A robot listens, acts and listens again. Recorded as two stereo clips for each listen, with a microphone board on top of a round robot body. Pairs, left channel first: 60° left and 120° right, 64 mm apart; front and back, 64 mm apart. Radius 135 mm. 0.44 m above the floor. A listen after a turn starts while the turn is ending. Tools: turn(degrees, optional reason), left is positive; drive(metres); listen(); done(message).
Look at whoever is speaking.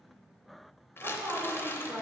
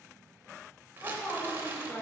turn(degrees=-65, reason="The woman speaking: 65° right.")
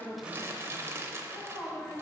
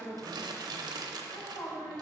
done("Facing the woman speaking, 2 to 4 m away.")